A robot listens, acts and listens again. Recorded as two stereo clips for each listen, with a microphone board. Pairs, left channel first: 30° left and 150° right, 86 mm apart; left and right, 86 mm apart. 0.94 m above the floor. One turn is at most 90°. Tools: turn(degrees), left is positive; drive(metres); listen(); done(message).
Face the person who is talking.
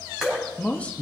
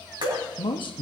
turn(degrees=90)
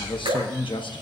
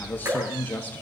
turn(degrees=20)
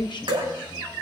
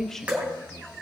done("Facing the man speaking.")